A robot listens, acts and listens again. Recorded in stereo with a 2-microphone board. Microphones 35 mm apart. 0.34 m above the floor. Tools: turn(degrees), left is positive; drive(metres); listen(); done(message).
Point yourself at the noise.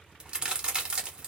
turn(degrees=-25)
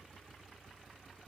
listen()
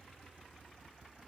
done("I heard a crack, but can't make it out now. It was about straight ahead or 130° right.")